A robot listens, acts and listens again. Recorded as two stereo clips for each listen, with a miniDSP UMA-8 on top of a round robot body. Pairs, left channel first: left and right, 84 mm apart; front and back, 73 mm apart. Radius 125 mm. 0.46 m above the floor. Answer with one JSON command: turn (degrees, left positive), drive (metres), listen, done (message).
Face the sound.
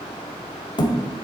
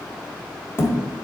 {"turn": 60}
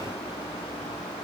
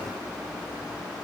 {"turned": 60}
{"done": "I heard a thud from this way, but can't make it out now."}